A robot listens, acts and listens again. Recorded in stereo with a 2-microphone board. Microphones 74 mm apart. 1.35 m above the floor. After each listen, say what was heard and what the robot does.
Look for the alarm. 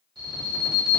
The alarm: about 75° right or 105° right. Turn 75° right.
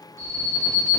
So it is at 30° right. Turn 30° right.
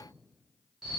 Found it: an alarm, straight ahead, 1 to 2 m away.